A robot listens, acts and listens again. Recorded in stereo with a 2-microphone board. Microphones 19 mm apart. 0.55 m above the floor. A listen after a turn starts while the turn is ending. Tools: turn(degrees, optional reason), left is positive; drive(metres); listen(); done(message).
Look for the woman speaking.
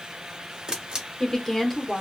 turn(degrees=30)
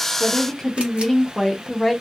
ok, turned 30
turn(degrees=30)
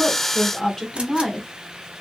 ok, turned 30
turn(degrees=20, reason="The woman speaking: about 20° left or 160° left.")
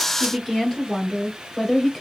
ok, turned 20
turn(degrees=20, reason="The woman speaking: about 20° left or 160° left.")
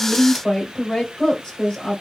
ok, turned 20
turn(degrees=140, reason="So it is at 140° left.")
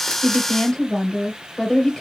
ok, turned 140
turn(degrees=20, reason="The woman speaking is now 20° left.")
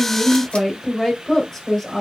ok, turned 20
done("Found it: a woman speaking, straight ahead.")